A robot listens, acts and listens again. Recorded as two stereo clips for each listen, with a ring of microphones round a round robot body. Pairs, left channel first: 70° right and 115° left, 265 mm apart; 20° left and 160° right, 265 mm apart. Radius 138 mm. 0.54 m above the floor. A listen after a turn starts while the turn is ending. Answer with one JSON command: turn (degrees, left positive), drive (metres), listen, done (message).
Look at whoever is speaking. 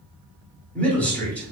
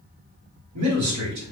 {"turn": -150}
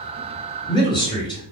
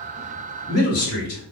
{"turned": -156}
{"done": "Found it: a man speaking, straight ahead."}